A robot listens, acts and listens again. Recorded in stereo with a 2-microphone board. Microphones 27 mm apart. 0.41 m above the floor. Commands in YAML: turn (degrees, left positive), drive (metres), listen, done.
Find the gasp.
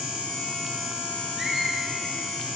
listen: true
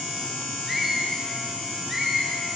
listen: true
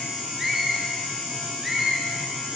done: "I can't make out a gasp, only a squeak."